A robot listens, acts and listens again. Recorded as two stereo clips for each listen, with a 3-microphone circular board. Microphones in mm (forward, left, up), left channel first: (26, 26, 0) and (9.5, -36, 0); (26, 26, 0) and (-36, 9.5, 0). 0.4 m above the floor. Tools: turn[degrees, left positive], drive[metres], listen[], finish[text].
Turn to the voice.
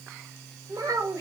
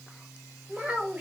Thought: The child speaking: 95° right.
Action: turn[-95]
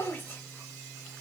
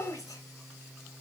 Thought: The child speaking is now 15° left.
Action: turn[15]
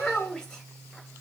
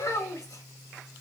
Action: finish[Found it: a child speaking, straight ahead.]